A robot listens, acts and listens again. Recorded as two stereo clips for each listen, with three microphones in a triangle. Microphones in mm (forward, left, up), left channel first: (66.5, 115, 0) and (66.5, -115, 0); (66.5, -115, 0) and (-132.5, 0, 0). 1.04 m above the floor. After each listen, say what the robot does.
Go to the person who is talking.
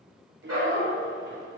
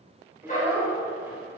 Turn 130° right.
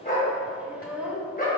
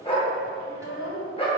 Drive 1.0 m forward.
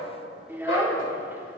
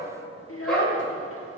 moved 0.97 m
Turn 10° right.
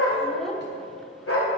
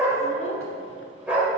Keep listening.
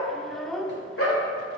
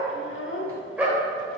Drive 1.0 m forward.
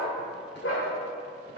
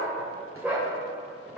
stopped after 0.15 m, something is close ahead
Keep listening.
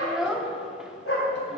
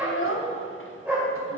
I am next to the child speaking.